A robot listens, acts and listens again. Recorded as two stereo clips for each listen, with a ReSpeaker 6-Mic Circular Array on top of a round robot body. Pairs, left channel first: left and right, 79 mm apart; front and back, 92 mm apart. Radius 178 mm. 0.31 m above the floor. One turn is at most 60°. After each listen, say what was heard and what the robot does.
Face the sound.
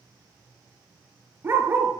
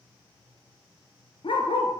The dog barking: 25° right. Turn 25° right.
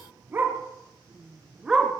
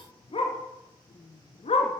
Facing the dog barking.